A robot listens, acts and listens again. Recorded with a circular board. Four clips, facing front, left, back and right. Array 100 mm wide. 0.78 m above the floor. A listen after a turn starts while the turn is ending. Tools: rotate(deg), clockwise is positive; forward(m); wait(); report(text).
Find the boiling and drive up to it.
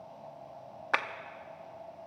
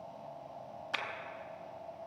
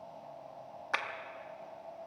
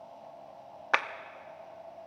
wait()
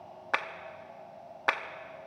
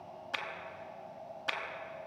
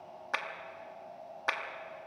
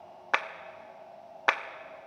wait()
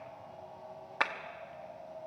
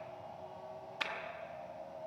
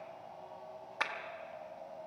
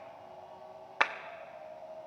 report("I can't make out boiling to turn to.")